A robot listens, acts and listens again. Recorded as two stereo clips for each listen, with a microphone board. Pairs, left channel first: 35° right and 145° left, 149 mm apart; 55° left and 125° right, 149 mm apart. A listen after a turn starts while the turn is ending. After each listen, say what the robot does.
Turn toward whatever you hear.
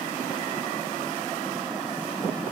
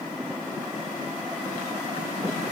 Keep listening.
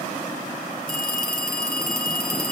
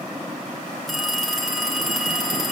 Turn 35° right.
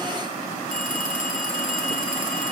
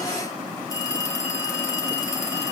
Turn 10° right.
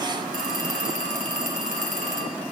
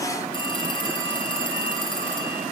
Found it: a phone ringing, straight ahead.